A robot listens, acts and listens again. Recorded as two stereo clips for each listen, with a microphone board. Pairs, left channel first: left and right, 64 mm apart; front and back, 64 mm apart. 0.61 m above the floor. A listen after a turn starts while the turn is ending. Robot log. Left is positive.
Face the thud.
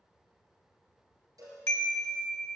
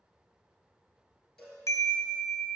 cmd idle
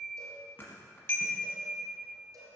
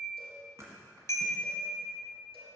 note: The thud: 145° left.
cmd yaw +145
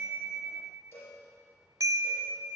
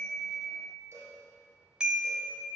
end: I heard a thud from this way, but can't make it out now.